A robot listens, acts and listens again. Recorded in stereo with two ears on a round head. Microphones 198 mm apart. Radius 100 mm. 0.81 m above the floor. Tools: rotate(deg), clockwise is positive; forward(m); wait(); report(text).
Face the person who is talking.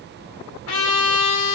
wait()
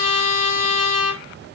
wait()
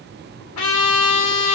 report("I can't make out anyone speaking, only a trumpet.")